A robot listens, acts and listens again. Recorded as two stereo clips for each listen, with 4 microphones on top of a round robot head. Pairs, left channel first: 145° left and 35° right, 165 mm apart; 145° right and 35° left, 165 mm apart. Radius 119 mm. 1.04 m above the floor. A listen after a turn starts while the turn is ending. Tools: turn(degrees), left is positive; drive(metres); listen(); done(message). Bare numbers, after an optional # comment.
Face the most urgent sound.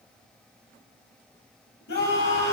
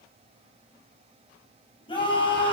# The scream: 155° left.
turn(155)
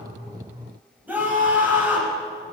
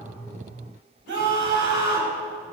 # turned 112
# The scream is now 45° left.
turn(45)
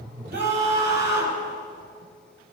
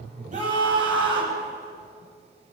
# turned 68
# The scream is now 25° right.
turn(-25)
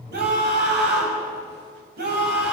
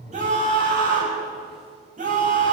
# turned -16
# The scream is now 10° right.
turn(-10)
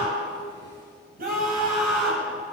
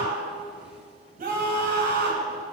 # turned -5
done("Facing the scream.")